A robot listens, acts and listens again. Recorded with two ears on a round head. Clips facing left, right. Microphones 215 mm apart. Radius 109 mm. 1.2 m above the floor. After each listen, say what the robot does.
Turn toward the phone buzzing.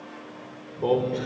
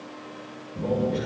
Turn 90° right.
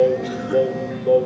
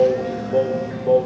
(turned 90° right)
Facing the phone buzzing, 2 to 4 m away.